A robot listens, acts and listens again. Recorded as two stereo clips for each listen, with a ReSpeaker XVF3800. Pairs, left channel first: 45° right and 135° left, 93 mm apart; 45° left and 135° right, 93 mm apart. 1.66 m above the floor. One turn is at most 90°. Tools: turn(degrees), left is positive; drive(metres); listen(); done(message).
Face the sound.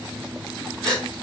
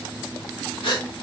turn(degrees=35)
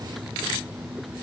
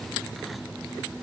done("I heard a gasp from this way, but can't make it out now.")